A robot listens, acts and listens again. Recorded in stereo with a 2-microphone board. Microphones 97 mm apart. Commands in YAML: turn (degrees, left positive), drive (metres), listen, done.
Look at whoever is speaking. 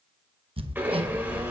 turn: -55
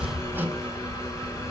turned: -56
turn: -70
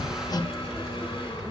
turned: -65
done: "Facing the child speaking, 1 to 2 m away."